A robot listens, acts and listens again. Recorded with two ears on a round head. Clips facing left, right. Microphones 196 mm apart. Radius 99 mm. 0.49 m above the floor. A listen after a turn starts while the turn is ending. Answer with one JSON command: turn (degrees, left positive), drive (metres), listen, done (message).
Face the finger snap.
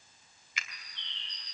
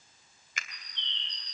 {"turn": -45}
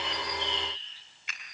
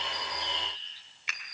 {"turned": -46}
{"turn": -85}
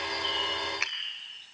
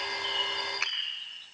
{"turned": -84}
{"done": "Facing the finger snap."}